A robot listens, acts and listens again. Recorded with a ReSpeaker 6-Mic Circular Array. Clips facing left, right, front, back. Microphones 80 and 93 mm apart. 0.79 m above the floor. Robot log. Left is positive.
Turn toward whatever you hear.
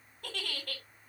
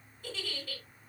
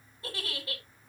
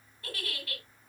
note: The giggle: 65° left.
cmd yaw +65
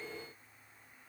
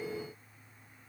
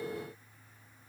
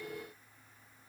cmd idle
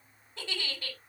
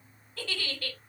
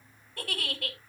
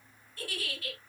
note: The giggle is now 25° left.
cmd yaw +25
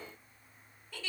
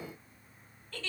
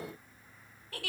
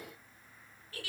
note: The giggle is now 10° left.
cmd yaw +10
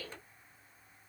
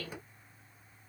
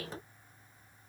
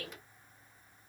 cmd idle
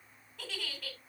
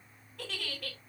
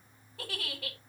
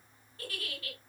end: Found it: a giggle, straight ahead.